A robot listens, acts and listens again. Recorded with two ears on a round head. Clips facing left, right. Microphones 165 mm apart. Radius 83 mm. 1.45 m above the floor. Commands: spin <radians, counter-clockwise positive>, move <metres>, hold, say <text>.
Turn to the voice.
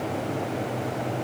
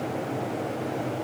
hold
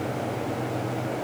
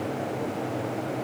hold
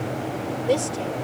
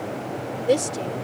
spin -0.35
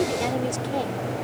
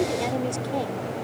say Found it: a woman speaking, straight ahead.